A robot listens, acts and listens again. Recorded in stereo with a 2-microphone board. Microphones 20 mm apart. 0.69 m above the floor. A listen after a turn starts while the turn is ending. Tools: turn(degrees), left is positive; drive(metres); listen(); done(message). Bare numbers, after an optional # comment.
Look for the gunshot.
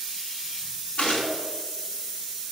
# The gunshot: about 70° left or 110° left.
turn(70)
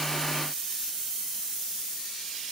listen()
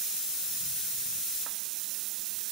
done("I heard a gunshot, but can't make it out now. It was about straight ahead or 40° left.")